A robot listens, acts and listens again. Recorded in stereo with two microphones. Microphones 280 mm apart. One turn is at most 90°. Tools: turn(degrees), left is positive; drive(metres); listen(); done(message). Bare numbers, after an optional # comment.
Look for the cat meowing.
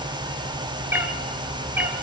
turn(-30)
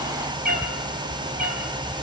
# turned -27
# So it is at 150° right.
turn(-90)
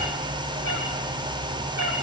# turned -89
# The cat meowing is now 65° right.
turn(-65)
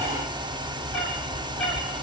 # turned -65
done("Found it: a cat meowing, straight ahead, over 4 m away.")